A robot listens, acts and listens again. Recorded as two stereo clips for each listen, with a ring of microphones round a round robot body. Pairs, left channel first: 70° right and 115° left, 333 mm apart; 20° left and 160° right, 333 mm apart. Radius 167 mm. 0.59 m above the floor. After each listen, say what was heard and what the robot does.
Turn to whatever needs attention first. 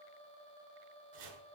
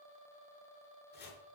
Keep listening.
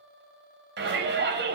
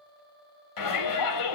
The shout: 55° left. Turn 55° left.
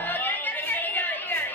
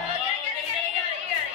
The shout is now 15° left. Turn 15° left.
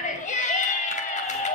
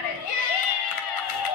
Found it: a shout, straight ahead.